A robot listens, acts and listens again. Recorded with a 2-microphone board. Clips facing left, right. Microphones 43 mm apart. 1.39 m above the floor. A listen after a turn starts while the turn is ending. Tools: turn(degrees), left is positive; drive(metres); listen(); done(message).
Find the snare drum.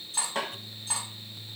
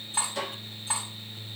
turn(degrees=50)
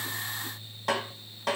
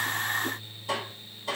turn(degrees=75)
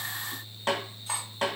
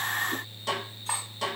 turn(degrees=35)
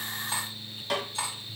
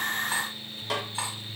turn(degrees=-10)
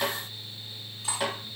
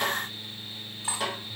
done("Found it: a snare drum, straight ahead, 1 to 2 m away.")